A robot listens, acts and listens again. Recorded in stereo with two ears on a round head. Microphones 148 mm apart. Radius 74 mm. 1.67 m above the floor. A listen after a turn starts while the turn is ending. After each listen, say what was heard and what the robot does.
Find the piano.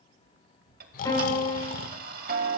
The piano: about 20° left or 160° left. Turn 20° left.
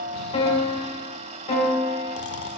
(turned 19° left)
So it is at 140° left. Turn 140° left.
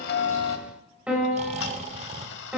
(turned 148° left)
The piano is now 10° right. Turn 10° right.
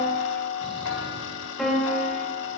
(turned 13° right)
Found it: a piano, straight ahead.